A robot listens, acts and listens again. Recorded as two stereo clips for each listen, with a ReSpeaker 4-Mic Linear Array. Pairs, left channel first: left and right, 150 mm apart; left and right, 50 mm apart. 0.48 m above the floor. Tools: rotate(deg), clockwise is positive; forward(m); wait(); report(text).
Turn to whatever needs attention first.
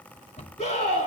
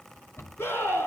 rotate(-45)
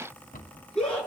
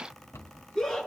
report("Found it: a scream, straight ahead, over 4 m away.")